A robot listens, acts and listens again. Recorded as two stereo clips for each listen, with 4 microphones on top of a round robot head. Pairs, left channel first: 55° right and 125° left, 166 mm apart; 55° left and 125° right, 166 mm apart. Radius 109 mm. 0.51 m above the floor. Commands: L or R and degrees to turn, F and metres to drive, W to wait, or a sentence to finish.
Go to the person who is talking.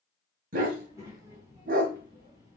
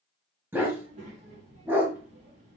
R165
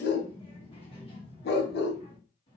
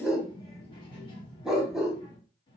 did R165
F1.0
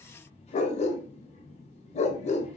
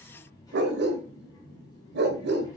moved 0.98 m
R10
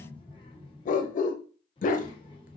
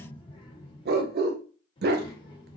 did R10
F1.0
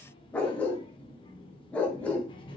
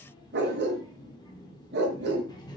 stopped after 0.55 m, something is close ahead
I am next to the child speaking.